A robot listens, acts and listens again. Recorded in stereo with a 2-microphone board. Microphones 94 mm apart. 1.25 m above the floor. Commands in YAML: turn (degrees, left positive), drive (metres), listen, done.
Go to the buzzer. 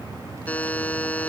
turn: 15
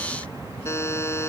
turn: 150
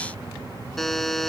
drive: 1.0
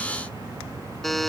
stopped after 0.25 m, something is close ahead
done: "Blocked. The buzzer is further on, straight ahead."